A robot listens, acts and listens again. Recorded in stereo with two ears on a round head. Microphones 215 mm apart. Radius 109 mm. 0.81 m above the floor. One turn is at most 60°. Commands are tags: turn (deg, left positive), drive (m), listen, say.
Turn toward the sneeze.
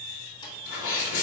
<turn deg="60"/>
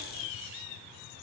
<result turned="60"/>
<listen/>
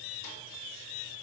<say>I heard a sneeze, but can't make it out now. It was about straight ahead or 60° left.</say>